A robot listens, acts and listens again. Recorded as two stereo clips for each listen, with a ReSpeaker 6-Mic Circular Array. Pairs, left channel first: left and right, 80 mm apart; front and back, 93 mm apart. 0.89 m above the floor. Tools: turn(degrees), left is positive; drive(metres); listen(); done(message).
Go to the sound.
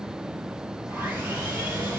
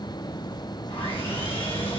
turn(degrees=-20)
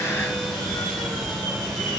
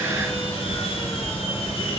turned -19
drive(metres=1.0)
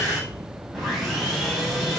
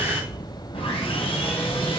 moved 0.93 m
drive(metres=1.0)
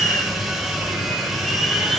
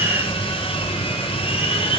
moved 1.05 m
drive(metres=1.0)
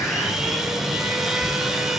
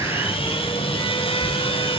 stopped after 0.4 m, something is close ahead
done("Arrived at the sawing, straight ahead.")